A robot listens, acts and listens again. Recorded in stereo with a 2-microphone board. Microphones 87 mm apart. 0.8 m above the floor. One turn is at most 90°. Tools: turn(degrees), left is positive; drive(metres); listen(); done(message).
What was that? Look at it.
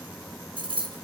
turn(degrees=-70)
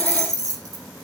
turn(degrees=-35)
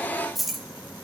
done("Facing the keys jangling, under 1 m away.")